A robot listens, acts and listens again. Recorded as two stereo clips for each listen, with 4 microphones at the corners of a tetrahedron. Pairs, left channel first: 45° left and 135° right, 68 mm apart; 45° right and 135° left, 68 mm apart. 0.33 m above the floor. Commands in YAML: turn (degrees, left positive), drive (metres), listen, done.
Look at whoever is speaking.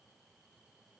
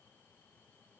listen: true
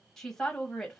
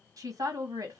turn: 130
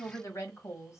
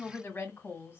done: "Found it: a woman speaking, straight ahead."